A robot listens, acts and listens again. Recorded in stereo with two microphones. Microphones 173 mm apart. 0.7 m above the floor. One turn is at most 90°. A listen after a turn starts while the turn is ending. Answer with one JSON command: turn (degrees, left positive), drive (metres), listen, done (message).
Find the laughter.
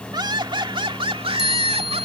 {"turn": -35}
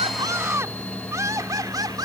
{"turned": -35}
{"turn": -20}
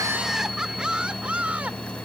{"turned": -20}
{"turn": -10}
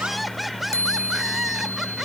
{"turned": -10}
{"done": "Facing the laughter."}